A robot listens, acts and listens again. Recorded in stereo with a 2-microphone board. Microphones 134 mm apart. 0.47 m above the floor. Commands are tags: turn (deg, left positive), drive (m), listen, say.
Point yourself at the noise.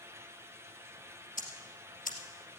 <turn deg="90"/>
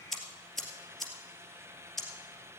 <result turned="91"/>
<say>Found it: ticking, straight ahead.</say>